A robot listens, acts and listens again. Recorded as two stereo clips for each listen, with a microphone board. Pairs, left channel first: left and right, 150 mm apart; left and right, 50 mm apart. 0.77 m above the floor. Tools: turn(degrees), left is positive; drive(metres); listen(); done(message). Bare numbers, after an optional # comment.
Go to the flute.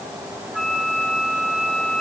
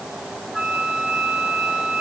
turn(30)
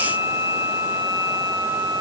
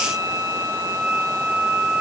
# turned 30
# So it is at 30° right.
turn(-30)
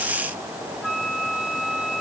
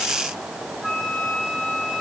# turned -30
drive(1.0)
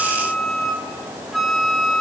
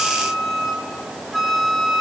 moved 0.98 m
drive(1.0)
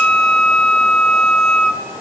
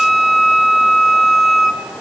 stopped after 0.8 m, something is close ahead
done("Arrived at the flute, straight ahead.")